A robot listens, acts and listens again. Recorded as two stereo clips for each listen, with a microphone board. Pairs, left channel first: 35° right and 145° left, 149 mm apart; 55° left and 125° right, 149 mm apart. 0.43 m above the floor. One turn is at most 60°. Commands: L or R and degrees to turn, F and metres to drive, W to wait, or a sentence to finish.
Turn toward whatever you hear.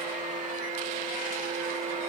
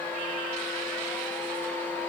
W
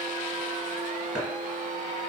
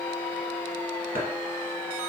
R60
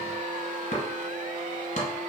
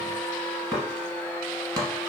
R60
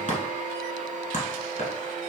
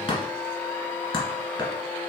Facing the chopping, 1 to 2 m away.